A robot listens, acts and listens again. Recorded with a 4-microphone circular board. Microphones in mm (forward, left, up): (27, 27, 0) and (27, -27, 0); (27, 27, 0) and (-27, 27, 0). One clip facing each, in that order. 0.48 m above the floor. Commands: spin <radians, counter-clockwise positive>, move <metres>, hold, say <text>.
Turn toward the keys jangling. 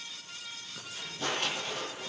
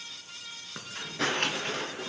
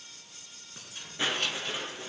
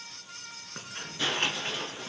spin -2.27
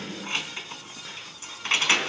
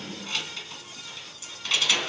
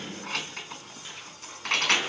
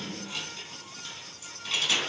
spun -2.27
spin 0.61
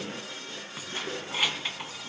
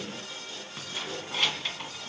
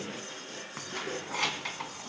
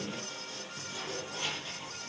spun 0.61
spin 0.17
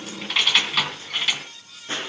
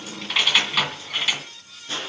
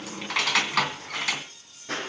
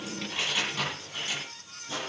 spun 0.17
say Found it: keys jangling, straight ahead, 2 to 4 m away.